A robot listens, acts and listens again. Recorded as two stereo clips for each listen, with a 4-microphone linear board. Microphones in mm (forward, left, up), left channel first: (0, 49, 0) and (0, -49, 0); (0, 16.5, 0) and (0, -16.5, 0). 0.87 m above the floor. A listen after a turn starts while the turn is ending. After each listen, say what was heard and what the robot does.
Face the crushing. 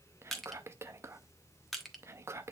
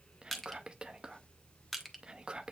Turn 30° left.
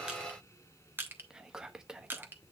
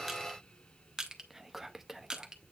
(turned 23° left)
So it is at 20° right. Turn 20° right.
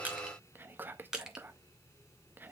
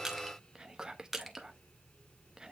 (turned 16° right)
Found it: crushing, straight ahead, 1 to 2 m away.